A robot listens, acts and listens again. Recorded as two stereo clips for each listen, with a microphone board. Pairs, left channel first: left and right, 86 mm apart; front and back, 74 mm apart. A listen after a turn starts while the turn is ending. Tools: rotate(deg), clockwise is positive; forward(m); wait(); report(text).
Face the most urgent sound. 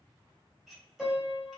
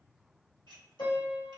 wait()
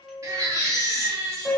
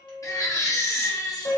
rotate(40)
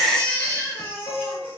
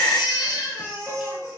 rotate(-30)
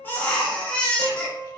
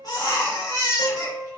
rotate(-15)
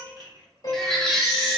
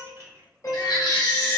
report("Found it: a baby crying, straight ahead.")